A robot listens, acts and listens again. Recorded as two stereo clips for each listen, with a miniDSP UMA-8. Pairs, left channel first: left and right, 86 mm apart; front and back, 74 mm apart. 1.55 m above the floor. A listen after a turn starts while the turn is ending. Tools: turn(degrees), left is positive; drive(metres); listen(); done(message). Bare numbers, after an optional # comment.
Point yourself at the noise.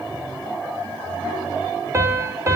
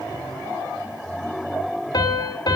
# The piano: 35° right.
turn(-35)
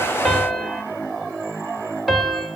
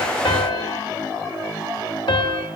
done("Facing the piano.")